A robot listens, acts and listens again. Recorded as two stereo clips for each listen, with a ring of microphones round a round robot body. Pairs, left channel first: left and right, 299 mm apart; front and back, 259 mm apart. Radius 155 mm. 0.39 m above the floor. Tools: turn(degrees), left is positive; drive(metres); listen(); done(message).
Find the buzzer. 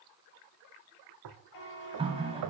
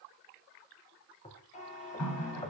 turn(degrees=65)
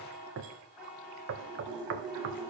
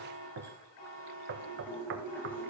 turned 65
done("Facing the buzzer.")